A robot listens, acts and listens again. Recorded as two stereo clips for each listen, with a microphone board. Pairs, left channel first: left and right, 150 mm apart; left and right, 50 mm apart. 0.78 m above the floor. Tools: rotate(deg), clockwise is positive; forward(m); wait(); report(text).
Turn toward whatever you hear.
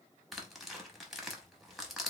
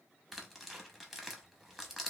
rotate(-30)
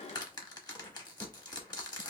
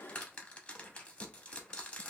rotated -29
rotate(-150)
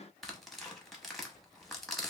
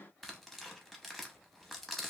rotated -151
report("Found it: tearing paper, straight ahead, under 1 m away.")